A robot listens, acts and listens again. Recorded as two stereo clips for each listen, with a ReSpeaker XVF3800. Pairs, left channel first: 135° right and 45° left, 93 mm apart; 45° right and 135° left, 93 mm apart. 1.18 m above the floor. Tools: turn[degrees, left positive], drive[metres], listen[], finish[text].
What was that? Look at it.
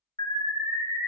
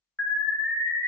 Thought: The alarm: 115° right.
Action: turn[-115]
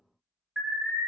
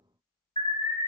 Thought: The alarm is now 45° right.
Action: turn[-45]
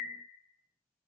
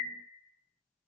Thought: The alarm is now 25° right.
Action: turn[-25]
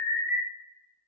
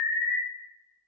Action: finish[Found it: an alarm, straight ahead.]